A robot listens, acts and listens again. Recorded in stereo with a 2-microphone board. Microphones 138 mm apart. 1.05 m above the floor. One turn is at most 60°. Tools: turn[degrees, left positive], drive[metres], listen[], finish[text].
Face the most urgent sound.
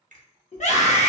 Thought: The scream: about 60° left or 120° left.
Action: turn[60]
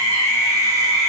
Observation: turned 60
Thought: So it is at 25° left.
Action: turn[25]
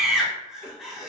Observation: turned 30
Action: finish[Found it: a scream, straight ahead, 1 to 2 m away.]